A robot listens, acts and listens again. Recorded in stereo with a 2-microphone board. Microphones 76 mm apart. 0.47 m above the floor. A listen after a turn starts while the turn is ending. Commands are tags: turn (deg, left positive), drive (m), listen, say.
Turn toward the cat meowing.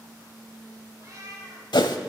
<turn deg="-50"/>
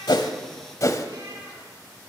<listen/>
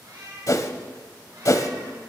<turn deg="-65"/>
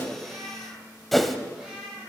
<say>Found it: a cat meowing, straight ahead.</say>